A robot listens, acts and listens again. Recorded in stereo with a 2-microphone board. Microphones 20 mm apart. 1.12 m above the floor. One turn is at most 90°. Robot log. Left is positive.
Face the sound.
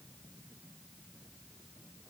cmd idle
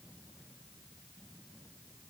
cmd idle
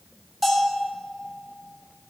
cmd yaw -30
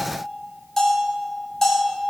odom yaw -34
note: So it is at 20° left.
cmd yaw +20
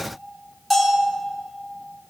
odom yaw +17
end: Facing the bell, 2 to 4 m away.